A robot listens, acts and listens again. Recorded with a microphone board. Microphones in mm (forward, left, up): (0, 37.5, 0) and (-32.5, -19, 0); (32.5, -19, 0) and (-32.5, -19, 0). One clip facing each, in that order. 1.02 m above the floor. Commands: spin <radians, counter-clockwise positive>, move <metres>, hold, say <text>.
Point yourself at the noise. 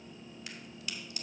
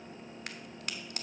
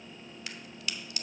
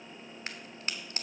spin -2.36
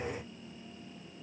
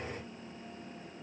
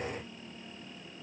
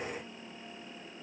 say Facing where the crack came from. I can't hear it now.